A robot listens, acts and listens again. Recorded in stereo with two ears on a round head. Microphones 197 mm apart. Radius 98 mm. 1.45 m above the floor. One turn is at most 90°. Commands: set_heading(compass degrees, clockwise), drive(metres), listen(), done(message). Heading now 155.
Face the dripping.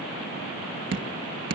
set_heading(210)
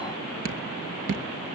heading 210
set_heading(275)
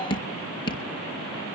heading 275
set_heading(250)
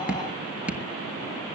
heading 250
done("Facing the dripping, 1 to 2 m away.")